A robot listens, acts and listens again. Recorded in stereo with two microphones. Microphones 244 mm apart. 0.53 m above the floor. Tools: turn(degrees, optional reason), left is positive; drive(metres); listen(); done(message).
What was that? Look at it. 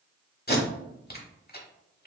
turn(degrees=40, reason="The tape being pulled: about 40° left or 140° left.")
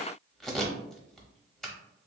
done("Facing the tape being pulled.")